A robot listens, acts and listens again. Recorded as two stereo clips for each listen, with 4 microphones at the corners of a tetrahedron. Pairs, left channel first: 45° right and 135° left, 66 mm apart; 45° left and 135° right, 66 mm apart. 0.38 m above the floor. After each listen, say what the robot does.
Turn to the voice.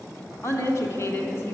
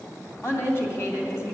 Found it: a woman speaking, straight ahead.